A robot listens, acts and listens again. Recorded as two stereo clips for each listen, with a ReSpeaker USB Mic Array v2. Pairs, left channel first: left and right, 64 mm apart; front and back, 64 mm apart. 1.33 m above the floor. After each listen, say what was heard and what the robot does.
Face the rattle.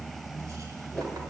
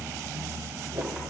Keep listening.
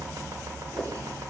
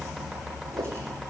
Keep listening.
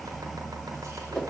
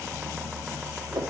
I can't make out a rattle.